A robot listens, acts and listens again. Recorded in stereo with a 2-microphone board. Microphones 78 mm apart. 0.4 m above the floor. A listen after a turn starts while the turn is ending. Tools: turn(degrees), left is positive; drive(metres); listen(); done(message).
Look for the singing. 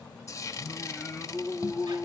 turn(degrees=-30)
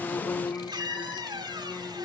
turn(degrees=15)
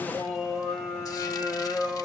turn(degrees=-15)
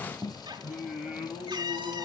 turn(degrees=-10)
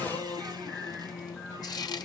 done("Found it: singing, straight ahead, over 4 m away.")